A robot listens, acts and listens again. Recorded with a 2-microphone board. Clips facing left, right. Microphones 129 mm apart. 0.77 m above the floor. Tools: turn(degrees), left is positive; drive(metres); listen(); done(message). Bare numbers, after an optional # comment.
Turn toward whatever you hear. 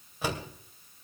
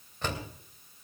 turn(30)
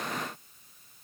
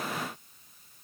listen()
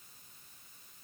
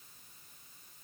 done("I heard a door slam, but can't make it out now. It was about 20° right or 140° left.")